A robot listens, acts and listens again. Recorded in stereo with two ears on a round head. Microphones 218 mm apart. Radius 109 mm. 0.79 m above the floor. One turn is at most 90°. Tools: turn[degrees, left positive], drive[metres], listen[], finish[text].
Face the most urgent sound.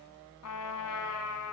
Action: listen[]
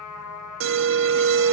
Thought: The alarm: about 60° right or 120° right.
Action: turn[-60]
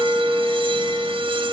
Thought: So it is at 25° right.
Action: turn[-25]
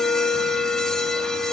Action: finish[Facing the alarm.]